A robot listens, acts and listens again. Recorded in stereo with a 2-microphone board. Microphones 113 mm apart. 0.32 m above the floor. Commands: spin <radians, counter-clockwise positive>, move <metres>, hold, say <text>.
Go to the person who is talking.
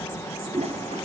hold
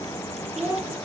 spin -0.44
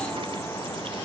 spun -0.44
hold
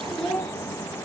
move 1.0
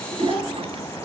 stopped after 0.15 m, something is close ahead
hold
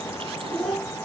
say Something is in my way. I am facing the child speaking but have not reached it.